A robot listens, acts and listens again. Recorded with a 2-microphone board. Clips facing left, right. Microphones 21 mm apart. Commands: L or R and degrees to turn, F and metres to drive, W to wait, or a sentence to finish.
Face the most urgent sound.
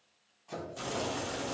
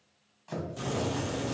W
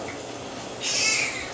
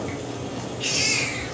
R35
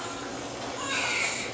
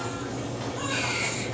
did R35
Facing the baby crying, 1 to 2 m away.